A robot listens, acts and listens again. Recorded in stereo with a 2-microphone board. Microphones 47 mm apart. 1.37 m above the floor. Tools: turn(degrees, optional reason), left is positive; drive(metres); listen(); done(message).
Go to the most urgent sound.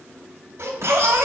turn(degrees=-60, reason="The baby crying: about 60° right or 120° right.")
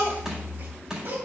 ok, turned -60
turn(degrees=-50, reason="So it is at 50° right.")
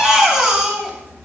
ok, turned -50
turn(degrees=-15, reason="The baby crying is now 15° right.")
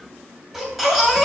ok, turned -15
drive(metres=1.0)
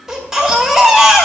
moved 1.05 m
turn(degrees=-10, reason="The baby crying is now 10° right.")
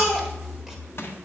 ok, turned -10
drive(metres=1.0)
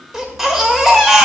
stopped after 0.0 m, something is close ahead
turn(degrees=-10, reason="The baby crying is now 10° right.")
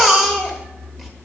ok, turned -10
done("Arrived at the baby crying, straight ahead.")